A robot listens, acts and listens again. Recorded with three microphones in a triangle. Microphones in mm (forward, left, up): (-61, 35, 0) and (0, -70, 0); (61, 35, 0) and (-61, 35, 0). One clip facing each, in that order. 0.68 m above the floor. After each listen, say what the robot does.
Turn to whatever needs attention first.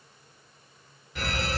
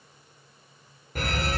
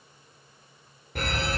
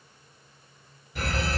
Turn 25° right.
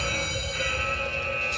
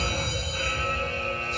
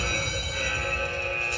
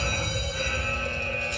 Facing the fire alarm.